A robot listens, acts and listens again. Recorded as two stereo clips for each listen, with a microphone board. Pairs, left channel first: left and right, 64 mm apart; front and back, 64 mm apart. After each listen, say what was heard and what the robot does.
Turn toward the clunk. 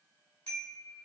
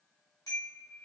Keep listening.
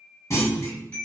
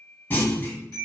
The clunk: 55° left. Turn 55° left.
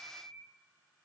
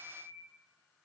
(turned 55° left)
Facing where the clunk came from. I can't hear it now.